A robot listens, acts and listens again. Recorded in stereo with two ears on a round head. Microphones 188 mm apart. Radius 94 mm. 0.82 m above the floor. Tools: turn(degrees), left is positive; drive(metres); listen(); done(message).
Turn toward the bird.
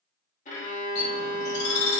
turn(degrees=50)
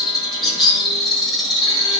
done("Found it: a bird, straight ahead.")